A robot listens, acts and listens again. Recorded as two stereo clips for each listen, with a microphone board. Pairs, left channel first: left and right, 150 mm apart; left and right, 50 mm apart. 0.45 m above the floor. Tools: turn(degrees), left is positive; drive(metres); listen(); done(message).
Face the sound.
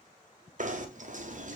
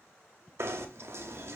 turn(degrees=-60)
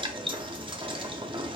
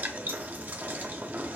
turn(degrees=-40)
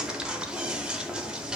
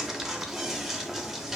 done("Found it: knocking, straight ahead, under 1 m away.")